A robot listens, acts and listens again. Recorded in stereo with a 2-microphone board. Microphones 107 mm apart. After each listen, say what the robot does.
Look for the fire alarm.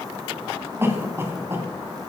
Keep listening.
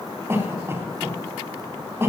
Keep listening.
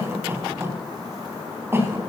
I can't make out a fire alarm to turn to.